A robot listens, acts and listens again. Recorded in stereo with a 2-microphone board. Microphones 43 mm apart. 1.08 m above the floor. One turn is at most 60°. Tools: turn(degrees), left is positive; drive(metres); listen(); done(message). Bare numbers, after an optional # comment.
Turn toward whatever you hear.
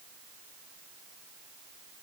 listen()
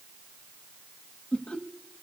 # The laughter: about 25° left or 155° left.
turn(25)
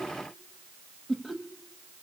done("Facing the laughter.")